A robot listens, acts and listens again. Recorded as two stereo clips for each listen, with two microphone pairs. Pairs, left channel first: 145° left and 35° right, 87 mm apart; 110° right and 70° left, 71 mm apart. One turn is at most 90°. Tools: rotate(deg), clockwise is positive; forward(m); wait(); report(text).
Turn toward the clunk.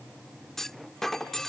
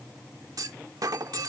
rotate(-60)
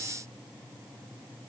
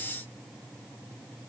report("I heard a clunk from this way, but can't make it out now.")